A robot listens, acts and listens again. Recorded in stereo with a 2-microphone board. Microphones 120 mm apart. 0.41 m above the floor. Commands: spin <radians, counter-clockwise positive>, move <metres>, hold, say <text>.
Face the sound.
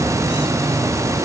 hold
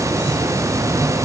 hold
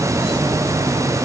say I can't make out anything.